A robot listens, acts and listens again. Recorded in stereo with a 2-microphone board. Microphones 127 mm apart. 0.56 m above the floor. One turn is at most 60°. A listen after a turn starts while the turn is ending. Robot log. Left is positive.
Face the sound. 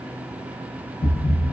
cmd yaw +60
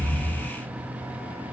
note: So it is at 40° left.
cmd yaw +40
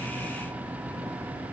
end: I heard a thud from this way, but can't make it out now.